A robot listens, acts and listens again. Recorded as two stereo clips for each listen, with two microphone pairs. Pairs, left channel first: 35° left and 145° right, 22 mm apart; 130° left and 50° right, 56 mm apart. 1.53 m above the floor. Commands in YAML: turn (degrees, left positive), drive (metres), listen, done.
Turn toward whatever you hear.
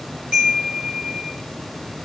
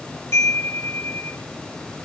turn: 170
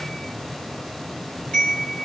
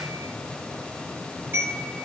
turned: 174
done: "Found it: a chime, straight ahead."